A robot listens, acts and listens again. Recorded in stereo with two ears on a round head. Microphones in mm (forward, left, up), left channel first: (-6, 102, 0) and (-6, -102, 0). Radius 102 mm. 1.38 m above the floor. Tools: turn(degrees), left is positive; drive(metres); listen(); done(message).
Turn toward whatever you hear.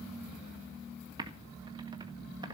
turn(degrees=-20)
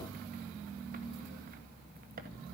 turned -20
turn(degrees=-140)
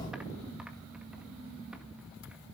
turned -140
listen()
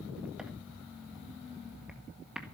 done("Found it: typing on a keyboard, straight ahead.")